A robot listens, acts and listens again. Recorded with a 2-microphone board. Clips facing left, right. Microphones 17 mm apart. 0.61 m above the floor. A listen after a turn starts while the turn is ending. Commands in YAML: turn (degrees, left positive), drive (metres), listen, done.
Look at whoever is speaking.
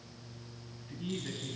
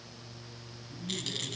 turn: 65
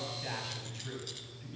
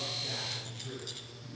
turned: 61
turn: 60
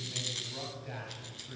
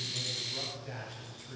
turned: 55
turn: 10
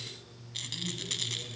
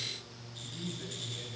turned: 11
turn: 10
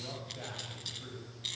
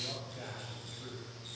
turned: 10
done: "Found it: a man speaking, straight ahead, 2 to 4 m away."